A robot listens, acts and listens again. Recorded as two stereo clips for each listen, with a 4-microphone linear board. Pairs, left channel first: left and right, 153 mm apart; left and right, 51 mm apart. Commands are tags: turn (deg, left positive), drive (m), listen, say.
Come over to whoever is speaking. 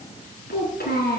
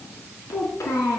<turn deg="90"/>
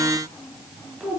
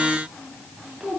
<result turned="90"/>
<drive m="1.0"/>
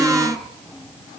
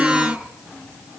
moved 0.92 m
<drive m="1.0"/>
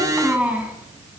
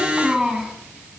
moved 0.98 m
<turn deg="-10"/>
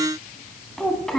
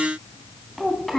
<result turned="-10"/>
<drive m="1.0"/>
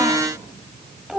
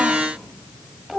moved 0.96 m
<drive m="1.0"/>
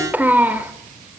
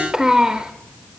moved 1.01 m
<turn deg="-15"/>
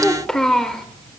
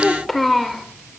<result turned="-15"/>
<drive m="1.0"/>
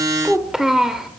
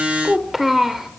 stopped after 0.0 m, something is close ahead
<say>I am next to the child speaking.</say>